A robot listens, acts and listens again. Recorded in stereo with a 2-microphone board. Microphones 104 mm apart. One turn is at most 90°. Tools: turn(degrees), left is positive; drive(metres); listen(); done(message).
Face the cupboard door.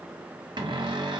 turn(degrees=-45)
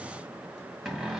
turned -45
done("Facing the cupboard door.")